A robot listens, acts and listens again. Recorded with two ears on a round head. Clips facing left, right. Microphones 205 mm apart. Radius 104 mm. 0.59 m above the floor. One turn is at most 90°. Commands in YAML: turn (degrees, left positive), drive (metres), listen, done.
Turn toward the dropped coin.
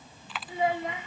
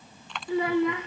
turn: 30
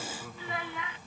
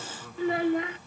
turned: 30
listen: true
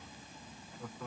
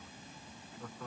done: "I heard a dropped coin, but can't make it out now. It was about 25° right or 145° left."